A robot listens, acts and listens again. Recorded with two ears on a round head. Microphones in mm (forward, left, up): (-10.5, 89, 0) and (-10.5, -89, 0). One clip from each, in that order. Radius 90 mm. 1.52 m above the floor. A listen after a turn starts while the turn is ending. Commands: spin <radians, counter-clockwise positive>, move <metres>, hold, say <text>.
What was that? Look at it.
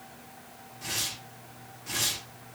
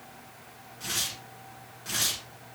spin -1.57
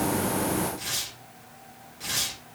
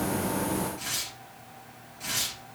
say Found it: tearing paper, straight ahead.